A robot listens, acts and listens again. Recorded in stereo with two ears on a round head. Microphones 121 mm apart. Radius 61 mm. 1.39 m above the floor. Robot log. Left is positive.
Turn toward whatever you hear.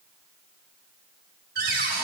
note: The cupboard door: about 75° right or 105° right.
cmd yaw -75
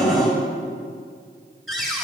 end: Facing the cupboard door, 2 to 4 m away.